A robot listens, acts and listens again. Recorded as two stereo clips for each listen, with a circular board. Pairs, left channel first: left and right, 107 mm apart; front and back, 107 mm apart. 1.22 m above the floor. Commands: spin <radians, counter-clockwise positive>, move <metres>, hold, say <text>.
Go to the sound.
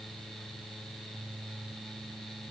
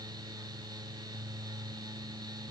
hold
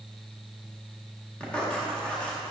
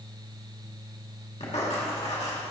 spin 0.17
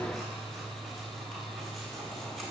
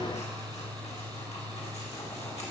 move 1.0
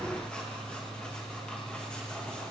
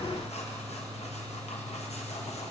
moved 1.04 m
spin 0.17
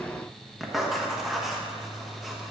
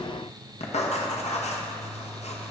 move 1.0
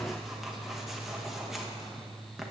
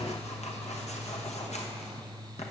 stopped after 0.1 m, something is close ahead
say Arrived at the writing, straight ahead.